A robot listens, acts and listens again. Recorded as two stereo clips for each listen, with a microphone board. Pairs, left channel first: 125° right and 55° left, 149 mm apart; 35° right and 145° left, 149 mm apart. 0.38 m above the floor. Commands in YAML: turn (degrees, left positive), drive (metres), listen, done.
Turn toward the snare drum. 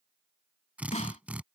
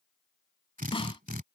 turn: -85
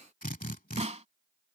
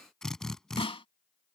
turn: 15
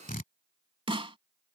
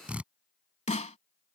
done: "Found it: a snare drum, straight ahead."